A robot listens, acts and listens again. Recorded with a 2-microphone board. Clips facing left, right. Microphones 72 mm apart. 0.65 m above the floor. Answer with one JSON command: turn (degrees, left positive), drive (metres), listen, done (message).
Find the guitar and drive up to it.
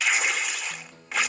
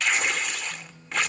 {"turn": 90}
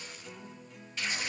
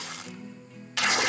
{"drive": 1.0}
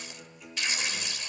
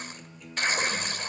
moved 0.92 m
{"drive": 1.0}
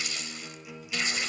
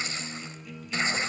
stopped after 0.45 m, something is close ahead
{"turn": 10}
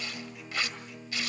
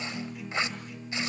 {"done": "Blocked. The guitar is further on, straight ahead."}